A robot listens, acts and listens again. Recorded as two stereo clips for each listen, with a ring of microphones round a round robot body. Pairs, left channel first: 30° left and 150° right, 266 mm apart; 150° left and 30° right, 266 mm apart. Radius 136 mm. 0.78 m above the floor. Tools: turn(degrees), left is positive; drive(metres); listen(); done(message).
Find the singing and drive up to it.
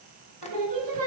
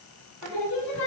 turn(degrees=-170)
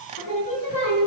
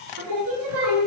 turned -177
turn(degrees=10)
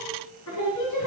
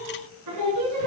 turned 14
drive(metres=1.0)
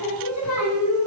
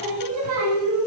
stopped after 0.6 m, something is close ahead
done("Blocked. The singing is further on, straight ahead.")